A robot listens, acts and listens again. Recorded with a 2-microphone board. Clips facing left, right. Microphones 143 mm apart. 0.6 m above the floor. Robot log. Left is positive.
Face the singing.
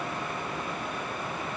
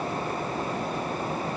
cmd idle
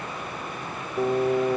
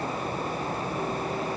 note: The singing: about 45° left or 135° left.
cmd yaw +45
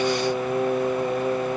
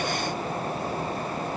note: So it is at 90° left.
cmd yaw +90
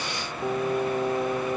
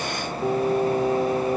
note: The singing is now 15° right.
cmd yaw -15
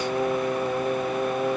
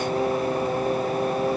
end: Found it: singing, straight ahead.